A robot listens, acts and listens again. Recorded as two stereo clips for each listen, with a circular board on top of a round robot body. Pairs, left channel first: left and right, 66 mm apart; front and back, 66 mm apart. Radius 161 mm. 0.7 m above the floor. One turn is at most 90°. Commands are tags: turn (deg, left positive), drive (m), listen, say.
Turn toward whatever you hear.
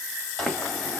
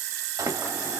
<turn deg="90"/>
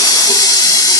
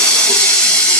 <turn deg="75"/>
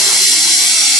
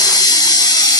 <say>Facing the running tap, 1 to 2 m away.</say>